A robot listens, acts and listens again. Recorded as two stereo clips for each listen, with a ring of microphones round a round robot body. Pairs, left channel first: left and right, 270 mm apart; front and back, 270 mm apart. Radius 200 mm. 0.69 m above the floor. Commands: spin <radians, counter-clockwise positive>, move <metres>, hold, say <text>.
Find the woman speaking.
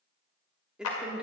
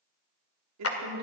spin -3.05
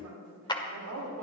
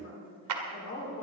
spin -0.87
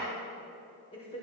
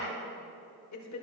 spin 0.26
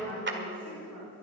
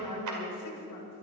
say Facing the woman speaking.